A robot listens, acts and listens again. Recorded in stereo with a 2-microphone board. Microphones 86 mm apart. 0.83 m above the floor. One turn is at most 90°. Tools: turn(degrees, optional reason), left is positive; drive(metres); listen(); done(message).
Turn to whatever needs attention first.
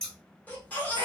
turn(degrees=20, reason="The baby crying: about 20° left or 160° left.")
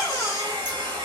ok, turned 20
turn(degrees=90, reason="So it is at 140° left.")
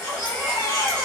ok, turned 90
turn(degrees=45, reason="The baby crying is now 45° left.")
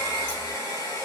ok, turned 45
listen()
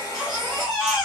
done("Facing the baby crying, 1 to 2 m away.")